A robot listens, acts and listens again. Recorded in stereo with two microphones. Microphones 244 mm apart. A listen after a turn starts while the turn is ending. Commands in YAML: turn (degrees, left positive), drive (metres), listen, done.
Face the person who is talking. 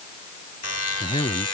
turn: 20
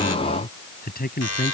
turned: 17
turn: 145
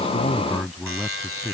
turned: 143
done: "Found it: a man speaking, straight ahead."